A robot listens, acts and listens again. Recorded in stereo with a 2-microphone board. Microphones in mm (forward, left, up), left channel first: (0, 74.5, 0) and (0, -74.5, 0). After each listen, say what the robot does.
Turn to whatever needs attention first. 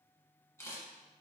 Keep listening.
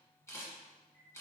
Keep listening.
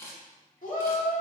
Turn 60° left.
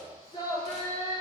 Turn 35° left.
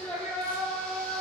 Turn 10° left.
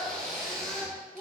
Facing the shout, 1 to 2 m away.